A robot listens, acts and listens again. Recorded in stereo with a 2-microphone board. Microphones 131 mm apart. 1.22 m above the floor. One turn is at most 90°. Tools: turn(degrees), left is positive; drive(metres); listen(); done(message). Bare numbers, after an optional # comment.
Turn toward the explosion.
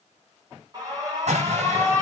# The explosion: about 60° right or 120° right.
turn(-60)
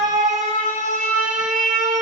listen()
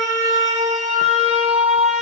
done("I heard an explosion, but can't make it out now. It was about straight ahead or 60° right.")